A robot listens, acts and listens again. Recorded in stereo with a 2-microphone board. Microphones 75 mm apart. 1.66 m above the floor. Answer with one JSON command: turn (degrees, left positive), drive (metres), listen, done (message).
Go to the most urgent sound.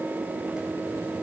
{"listen": true}
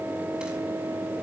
{"listen": true}
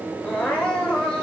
{"turn": 30}
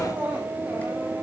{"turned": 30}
{"turn": -20}
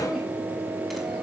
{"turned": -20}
{"listen": true}
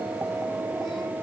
{"listen": true}
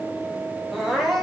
{"drive": 1.0}
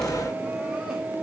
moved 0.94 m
{"listen": true}
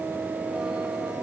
{"listen": true}
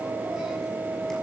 {"done": "I heard crying from this way, but can't make it out now. I did not reach it."}